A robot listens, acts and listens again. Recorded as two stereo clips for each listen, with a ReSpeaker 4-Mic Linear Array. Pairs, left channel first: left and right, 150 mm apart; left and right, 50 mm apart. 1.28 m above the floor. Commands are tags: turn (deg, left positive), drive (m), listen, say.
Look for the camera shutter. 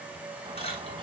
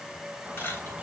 <turn deg="40"/>
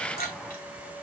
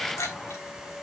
<turn deg="100"/>
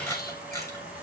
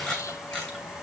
<turn deg="20"/>
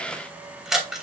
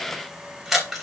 <say>Found it: a camera shutter, straight ahead.</say>